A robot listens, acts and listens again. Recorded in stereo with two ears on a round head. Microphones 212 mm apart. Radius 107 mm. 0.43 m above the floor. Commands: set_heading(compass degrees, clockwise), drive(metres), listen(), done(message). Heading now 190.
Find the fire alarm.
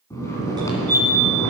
set_heading(210)
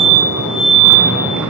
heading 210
set_heading(345)
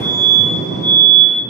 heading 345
done("Found it: a fire alarm, straight ahead, 2 to 4 m away.")